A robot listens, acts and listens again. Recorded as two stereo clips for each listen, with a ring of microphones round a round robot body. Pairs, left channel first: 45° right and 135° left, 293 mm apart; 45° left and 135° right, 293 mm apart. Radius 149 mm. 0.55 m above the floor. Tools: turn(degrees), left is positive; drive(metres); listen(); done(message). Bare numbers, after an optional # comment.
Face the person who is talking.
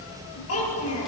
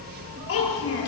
done("Found it: a child speaking, straight ahead, over 4 m away.")